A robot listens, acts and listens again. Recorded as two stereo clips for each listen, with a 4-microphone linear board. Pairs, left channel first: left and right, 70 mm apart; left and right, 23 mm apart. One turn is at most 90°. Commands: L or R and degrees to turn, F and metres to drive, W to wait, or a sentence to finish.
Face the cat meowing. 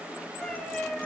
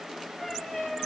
L30
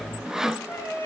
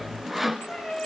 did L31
L90
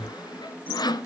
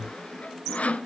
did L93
L45
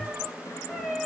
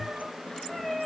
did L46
Facing the cat meowing.